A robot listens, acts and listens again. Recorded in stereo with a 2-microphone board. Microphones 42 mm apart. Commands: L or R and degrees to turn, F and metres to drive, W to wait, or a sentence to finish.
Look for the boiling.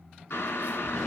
L90
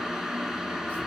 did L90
R10
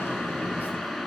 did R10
Found it: boiling, straight ahead, 1 to 2 m away.